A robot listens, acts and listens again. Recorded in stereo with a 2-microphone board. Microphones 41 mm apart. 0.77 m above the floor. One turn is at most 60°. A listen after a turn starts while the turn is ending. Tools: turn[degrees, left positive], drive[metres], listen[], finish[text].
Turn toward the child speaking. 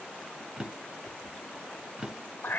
Action: listen[]
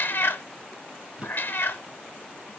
Action: listen[]
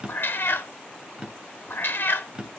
Action: finish[I can't make out a child speaking to turn to.]